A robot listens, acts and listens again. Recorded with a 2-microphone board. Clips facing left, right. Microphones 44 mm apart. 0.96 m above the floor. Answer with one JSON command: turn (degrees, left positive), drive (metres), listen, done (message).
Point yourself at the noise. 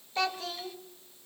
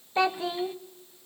{"turn": -20}
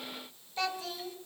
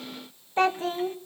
{"turn": -140}
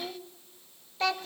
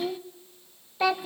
{"done": "Found it: a child speaking, straight ahead."}